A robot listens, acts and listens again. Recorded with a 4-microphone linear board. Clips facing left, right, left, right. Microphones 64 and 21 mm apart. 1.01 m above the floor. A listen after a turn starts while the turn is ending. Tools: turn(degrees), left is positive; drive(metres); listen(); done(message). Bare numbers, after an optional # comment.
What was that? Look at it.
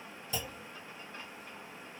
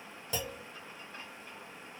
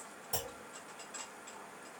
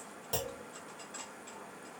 # The clunk: about 70° right or 110° right.
turn(-70)
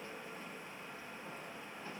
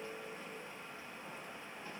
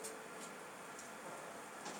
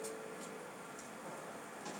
listen()
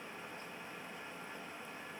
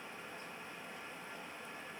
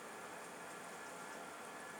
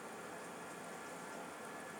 done("I heard a clunk, but can't make it out now. It was about straight ahead or 40° right.")